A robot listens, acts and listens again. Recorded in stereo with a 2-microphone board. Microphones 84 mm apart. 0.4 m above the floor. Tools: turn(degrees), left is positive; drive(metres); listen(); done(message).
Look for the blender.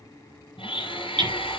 turn(degrees=90)
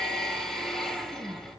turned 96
done("Found it: a blender, straight ahead, 2 to 4 m away.")